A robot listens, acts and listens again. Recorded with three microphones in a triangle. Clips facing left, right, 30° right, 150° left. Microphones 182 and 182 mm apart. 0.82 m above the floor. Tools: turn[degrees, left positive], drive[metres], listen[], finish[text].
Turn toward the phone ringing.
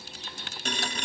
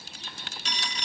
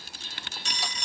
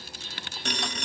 Thought: The phone ringing: 125° left.
Action: turn[125]
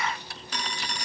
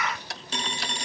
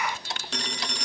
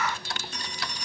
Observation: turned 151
Thought: The phone ringing is now 25° right.
Action: turn[-25]
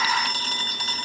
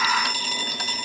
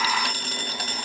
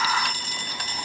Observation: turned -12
Thought: The phone ringing is now 10° right.
Action: turn[-10]
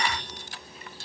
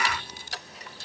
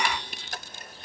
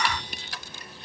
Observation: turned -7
Action: listen[]
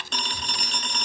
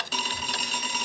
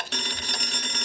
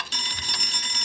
Action: finish[Facing the phone ringing.]